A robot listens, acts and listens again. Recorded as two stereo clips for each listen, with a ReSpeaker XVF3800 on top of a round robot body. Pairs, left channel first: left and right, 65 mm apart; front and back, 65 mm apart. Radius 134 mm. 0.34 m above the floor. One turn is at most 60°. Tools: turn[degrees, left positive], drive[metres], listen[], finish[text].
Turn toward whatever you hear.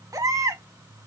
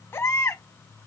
Thought: The baby crying: 50° right.
Action: turn[-50]
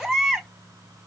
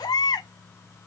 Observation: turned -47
Action: finish[Found it: a baby crying, straight ahead, 1 to 2 m away.]